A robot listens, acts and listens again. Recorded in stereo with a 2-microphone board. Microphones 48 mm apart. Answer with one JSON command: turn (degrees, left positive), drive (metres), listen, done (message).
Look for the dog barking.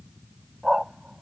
{"turn": -30}
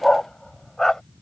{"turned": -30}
{"turn": 10}
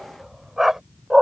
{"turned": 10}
{"turn": -15}
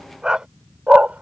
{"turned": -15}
{"turn": -25}
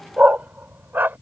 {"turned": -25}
{"turn": -45}
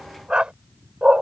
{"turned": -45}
{"turn": -20}
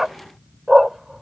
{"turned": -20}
{"done": "Found it: a dog barking, straight ahead."}